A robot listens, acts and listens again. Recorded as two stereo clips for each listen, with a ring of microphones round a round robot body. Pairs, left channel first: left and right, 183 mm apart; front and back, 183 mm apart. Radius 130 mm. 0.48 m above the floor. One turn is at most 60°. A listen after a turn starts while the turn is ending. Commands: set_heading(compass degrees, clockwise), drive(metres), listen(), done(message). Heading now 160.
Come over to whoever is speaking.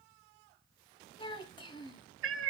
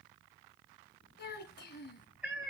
set_heading(135)
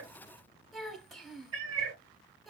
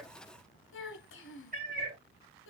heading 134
drive(1.0)
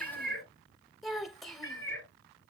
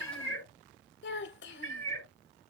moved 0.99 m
drive(1.0)
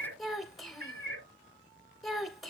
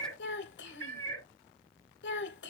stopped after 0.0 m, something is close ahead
done("I am next to the child speaking.")